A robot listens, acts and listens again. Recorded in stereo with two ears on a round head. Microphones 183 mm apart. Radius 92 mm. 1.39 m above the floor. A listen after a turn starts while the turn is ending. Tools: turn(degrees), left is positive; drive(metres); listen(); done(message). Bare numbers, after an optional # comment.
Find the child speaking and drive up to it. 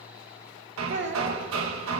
# The child speaking: about 60° right or 120° right.
turn(-60)
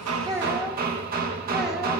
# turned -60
listen()
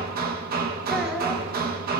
listen()
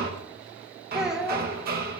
drive(1.0)
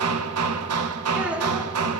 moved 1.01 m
listen()
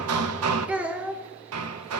drive(1.0)
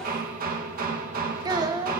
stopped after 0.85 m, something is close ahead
# The child speaking is now 20° right.
turn(-20)
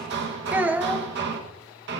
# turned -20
# The child speaking is now 10° right.
turn(-10)
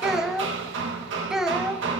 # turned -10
done("Arrived at the child speaking, straight ahead.")